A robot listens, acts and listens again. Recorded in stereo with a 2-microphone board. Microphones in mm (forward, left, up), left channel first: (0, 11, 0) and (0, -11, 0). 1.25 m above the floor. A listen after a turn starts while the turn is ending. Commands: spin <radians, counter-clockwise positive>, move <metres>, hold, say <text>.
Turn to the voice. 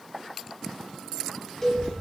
spin 0.96
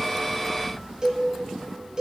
say Facing the child speaking, 1 to 2 m away.